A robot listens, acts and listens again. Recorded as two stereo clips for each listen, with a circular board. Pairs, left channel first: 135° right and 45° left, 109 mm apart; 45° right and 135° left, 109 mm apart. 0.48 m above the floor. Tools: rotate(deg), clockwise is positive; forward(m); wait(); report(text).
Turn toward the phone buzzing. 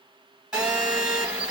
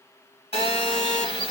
rotate(40)
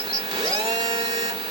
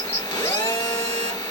report("Facing the phone buzzing.")